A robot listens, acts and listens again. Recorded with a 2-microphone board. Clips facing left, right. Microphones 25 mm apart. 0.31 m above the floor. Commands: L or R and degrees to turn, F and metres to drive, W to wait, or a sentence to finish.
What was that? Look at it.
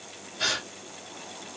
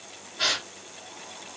R20
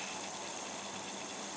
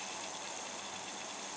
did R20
W
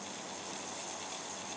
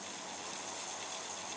I heard a gasp, but can't make it out now. It was about straight ahead or 140° right.